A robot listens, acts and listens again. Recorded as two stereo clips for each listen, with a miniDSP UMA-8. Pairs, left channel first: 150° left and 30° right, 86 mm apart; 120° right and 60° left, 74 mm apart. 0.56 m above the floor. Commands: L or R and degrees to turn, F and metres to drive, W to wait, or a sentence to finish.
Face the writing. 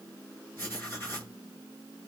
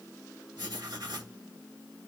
L85
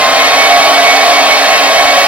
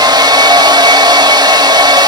W
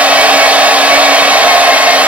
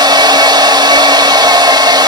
W
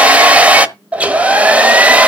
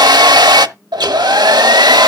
I heard writing from this way, but can't make it out now.